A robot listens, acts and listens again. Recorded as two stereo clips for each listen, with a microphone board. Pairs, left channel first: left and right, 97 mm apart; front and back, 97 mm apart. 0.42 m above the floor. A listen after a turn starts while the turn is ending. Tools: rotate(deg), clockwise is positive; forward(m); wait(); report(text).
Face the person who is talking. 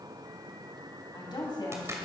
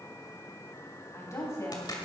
rotate(-55)
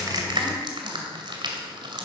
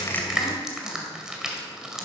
wait()
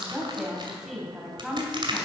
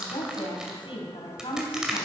report("Found it: a woman speaking, straight ahead, 2 to 4 m away.")